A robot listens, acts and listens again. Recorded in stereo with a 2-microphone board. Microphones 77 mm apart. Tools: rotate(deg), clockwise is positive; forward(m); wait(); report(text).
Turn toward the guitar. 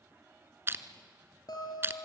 rotate(-65)
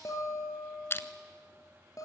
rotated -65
rotate(-50)
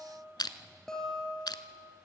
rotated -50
rotate(-10)
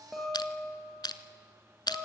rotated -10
report("Found it: a guitar, straight ahead.")